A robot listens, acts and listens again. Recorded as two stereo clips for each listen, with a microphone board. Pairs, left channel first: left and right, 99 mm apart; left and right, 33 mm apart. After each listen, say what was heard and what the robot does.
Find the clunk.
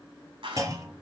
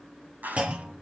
The clunk: about 35° right or 145° right. Turn 35° right.
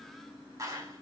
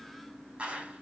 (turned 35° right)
Keep listening.
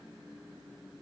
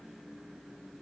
I heard a clunk, but can't make it out now. It was about straight ahead or 110° right.